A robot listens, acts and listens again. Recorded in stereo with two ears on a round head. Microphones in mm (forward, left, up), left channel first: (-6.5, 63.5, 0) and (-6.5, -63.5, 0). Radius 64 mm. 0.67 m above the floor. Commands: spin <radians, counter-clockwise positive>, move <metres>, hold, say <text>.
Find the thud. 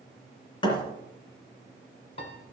spin 0.61
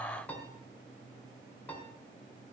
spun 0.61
hold
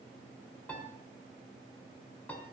say I heard a thud, but can't make it out now. It was about straight ahead or 110° left.